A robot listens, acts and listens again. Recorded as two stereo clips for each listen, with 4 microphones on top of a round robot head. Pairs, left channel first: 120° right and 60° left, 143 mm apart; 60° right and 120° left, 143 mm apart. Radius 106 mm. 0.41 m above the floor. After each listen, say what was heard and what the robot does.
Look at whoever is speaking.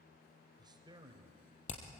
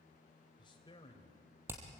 Facing the man speaking, 2 to 4 m away.